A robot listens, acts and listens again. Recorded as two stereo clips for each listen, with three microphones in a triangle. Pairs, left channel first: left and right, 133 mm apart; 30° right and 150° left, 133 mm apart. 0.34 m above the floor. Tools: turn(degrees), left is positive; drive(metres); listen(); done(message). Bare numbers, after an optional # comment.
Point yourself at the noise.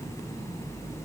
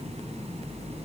listen()
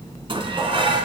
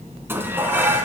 # The dishes clattering: 135° right.
turn(-135)
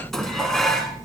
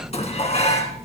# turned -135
done("Found it: dishes clattering, straight ahead, 2 to 4 m away.")